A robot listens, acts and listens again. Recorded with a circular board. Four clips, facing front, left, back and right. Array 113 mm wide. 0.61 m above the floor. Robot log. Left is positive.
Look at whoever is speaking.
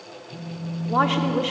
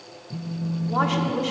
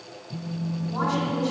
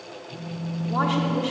note: The woman speaking: 10° left.
cmd yaw +10
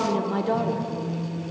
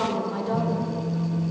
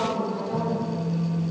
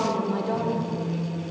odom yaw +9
end: Found it: a woman speaking, straight ahead.